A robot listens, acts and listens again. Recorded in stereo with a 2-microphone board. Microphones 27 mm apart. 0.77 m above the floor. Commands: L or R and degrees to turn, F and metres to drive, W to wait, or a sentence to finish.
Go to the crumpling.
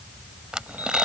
R30
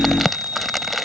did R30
F1.0
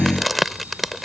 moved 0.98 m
F1.0
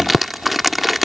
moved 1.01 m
F1.0
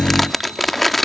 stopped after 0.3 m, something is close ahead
I am next to the crumpling.